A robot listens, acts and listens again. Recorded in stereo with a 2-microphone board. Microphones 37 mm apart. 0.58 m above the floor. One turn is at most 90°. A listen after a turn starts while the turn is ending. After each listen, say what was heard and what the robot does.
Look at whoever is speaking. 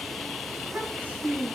The child speaking: about 50° right or 130° right. Turn 50° right.
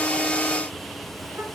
Keep listening.
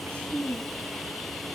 So it is at 80° right. Turn 80° right.
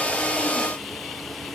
Keep listening.
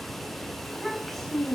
Facing the child speaking.